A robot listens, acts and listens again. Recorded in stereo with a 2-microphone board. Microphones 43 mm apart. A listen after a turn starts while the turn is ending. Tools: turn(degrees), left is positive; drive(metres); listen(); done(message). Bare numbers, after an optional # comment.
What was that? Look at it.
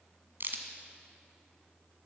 # The crack: about 55° right or 125° right.
turn(-55)
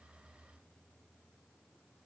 listen()
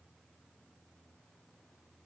done("I heard a crack, but can't make it out now. It was about straight ahead or 70° right.")